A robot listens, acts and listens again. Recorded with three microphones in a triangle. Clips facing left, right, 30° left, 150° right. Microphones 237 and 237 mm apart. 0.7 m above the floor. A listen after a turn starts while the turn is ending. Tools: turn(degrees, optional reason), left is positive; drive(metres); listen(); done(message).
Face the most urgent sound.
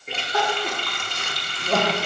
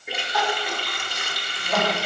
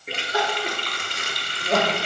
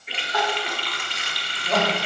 turn(degrees=90, reason="The crying: 90° left.")
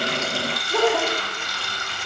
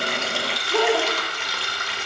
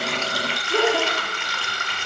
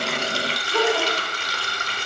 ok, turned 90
done("Found it: crying, straight ahead.")